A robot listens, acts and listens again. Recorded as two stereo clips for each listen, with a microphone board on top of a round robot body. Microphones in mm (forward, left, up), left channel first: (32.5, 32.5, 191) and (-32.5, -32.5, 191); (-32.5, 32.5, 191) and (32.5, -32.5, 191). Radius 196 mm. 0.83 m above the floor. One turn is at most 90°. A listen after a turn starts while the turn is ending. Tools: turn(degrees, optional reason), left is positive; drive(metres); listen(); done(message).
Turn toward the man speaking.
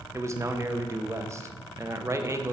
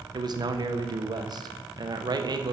turn(degrees=-80, reason="The man speaking: 80° right.")
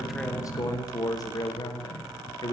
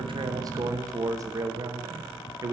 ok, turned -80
done("Facing the man speaking.")